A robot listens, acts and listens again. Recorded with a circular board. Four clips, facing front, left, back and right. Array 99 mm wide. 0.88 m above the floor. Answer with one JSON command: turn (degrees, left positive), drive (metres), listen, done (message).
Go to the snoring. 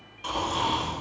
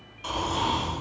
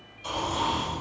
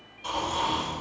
{"turn": 35}
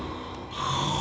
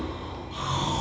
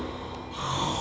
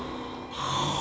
{"drive": 1.0}
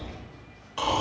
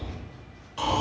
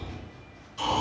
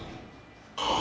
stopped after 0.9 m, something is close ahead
{"done": "Arrived at the snoring, straight ahead."}